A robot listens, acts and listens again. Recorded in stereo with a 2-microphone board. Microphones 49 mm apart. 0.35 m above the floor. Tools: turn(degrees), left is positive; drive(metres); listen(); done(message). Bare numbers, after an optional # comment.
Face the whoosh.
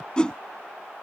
# The whoosh: about 20° left or 160° left.
turn(20)
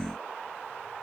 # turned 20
listen()
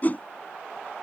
# So it is at 140° left.
turn(140)
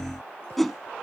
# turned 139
done("Found it: a whoosh, straight ahead.")